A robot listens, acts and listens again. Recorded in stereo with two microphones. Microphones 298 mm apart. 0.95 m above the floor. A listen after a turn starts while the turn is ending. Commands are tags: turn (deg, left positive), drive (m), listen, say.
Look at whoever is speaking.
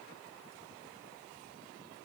<listen/>
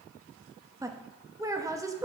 <turn deg="-30"/>
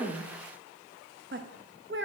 <turn deg="-140"/>
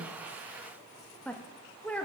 <say>Found it: a woman speaking, straight ahead.</say>